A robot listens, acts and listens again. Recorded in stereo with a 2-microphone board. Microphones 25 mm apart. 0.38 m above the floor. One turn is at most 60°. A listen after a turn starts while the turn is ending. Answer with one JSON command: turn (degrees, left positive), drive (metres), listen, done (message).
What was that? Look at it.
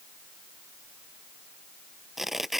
{"turn": -30}
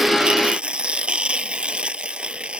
{"turn": -60}
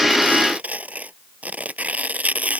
{"turn": -60}
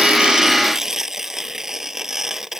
{"turn": -20}
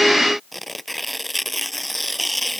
{"done": "Found it: tearing paper, straight ahead."}